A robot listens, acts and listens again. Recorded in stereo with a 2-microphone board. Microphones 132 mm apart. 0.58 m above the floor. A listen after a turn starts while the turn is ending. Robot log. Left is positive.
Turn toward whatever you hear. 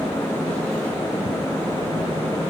cmd idle
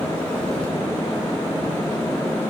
cmd idle
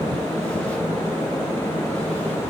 end: I can't make out anything to turn to.